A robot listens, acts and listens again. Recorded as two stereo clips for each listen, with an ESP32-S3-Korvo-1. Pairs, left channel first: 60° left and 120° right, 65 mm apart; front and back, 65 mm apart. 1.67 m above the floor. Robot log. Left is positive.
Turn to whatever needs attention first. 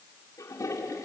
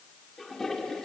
cmd idle
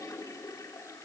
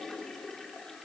cmd idle
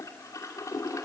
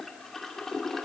end: I can't make out anything urgent, only a toilet flushing.